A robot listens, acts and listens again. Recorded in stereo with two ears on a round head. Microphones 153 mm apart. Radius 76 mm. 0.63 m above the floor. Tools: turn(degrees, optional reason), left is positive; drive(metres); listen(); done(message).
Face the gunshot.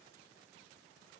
listen()
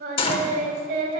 turn(degrees=30, reason="The gunshot: about 30° left or 150° left.")
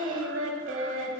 listen()
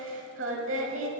done("I heard a gunshot, but can't make it out now. It was about straight ahead or 120° left.")